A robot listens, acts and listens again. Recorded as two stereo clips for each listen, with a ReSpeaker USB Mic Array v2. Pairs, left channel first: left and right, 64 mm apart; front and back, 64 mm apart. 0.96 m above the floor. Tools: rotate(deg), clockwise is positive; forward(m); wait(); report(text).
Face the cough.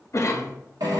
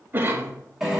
rotate(-125)
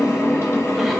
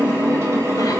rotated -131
wait()
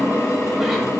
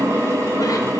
wait()
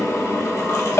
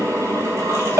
report("Facing where the cough came from. I can't hear it now.")